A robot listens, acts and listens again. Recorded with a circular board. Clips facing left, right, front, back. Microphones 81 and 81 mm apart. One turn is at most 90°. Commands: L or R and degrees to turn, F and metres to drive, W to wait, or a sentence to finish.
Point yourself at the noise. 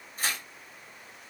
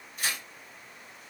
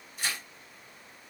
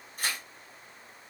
L90
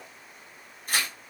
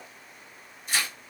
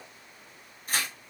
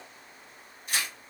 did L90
L50
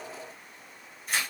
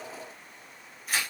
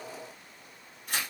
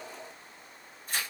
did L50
Facing the tearing paper.